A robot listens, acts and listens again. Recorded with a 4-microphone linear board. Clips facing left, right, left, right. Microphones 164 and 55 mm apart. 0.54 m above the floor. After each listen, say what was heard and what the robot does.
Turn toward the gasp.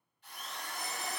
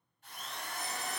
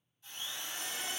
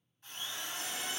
Keep listening.
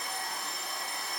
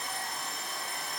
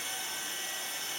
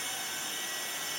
Keep listening.
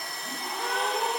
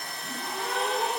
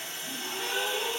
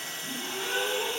Turn 30° right.
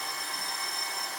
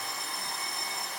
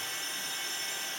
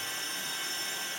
Keep listening.
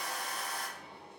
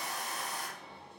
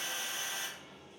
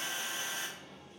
I heard a gasp, but can't make it out now. It was about 25° left or 145° right.